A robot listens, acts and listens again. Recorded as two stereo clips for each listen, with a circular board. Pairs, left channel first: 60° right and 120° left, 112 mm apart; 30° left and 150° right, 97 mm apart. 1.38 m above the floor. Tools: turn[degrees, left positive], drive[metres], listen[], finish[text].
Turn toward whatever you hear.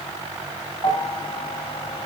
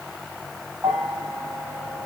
Thought: The bell: 95° right.
Action: turn[-95]
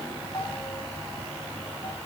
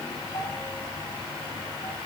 Action: listen[]
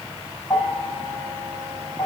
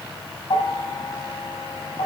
Thought: The bell is now 10° left.
Action: turn[10]
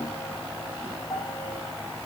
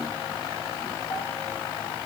Action: finish[Facing the bell.]